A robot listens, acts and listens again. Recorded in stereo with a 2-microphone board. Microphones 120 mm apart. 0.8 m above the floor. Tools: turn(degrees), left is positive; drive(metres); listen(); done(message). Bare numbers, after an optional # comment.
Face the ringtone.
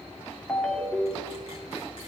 turn(30)
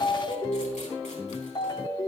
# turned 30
# So it is at 145° left.
turn(145)
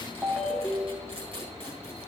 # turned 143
done("Found it: a ringtone, straight ahead, 1 to 2 m away.")